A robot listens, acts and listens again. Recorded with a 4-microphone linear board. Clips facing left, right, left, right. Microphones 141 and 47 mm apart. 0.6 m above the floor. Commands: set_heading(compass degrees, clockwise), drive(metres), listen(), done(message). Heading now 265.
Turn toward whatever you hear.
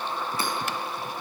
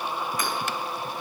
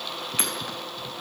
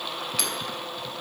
set_heading(235)
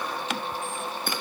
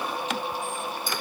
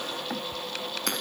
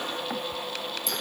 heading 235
set_heading(115)
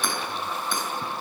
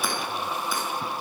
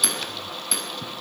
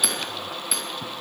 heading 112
done("Found it: hammering, straight ahead, over 4 m away.")